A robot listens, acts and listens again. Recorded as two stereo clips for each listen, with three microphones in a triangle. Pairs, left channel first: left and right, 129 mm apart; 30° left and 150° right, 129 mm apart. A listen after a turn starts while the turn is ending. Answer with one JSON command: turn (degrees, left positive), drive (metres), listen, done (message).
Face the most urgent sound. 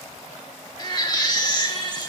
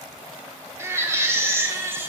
{"turn": 145}
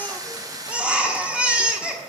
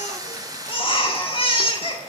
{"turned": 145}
{"turn": -10}
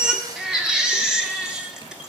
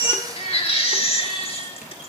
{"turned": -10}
{"done": "Facing the baby crying."}